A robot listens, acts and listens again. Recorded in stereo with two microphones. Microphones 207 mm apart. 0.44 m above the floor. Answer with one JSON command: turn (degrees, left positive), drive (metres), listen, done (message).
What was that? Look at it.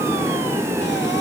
{"listen": true}
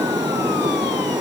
{"listen": true}
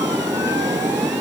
{"done": "I can't make out anything to turn to."}